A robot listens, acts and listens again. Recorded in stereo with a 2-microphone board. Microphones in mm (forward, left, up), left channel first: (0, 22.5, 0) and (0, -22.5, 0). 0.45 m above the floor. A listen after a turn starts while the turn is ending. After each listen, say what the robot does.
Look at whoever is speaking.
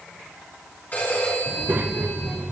Turn 40° right.
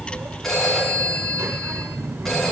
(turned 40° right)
Turn 95° right.
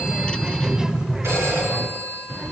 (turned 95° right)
Turn 15° right.
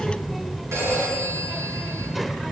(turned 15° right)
Facing the child speaking, under 1 m away.